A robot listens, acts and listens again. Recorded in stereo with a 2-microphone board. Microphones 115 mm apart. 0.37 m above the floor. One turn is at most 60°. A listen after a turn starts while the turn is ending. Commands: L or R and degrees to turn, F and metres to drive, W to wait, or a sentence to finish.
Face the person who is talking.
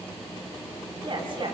R50
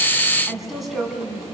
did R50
Found it: a woman speaking, straight ahead, 2 to 4 m away.